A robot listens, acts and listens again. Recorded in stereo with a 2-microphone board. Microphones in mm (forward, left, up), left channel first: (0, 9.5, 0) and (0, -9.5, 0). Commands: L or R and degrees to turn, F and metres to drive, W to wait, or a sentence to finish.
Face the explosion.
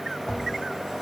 W
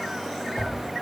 W
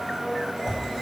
I can't make out an explosion, only a blender and a whoosh.